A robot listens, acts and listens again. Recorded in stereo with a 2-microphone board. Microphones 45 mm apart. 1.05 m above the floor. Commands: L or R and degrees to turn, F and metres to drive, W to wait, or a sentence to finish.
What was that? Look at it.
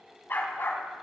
L55
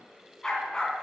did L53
L15
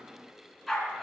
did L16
Found it: a dog barking, straight ahead.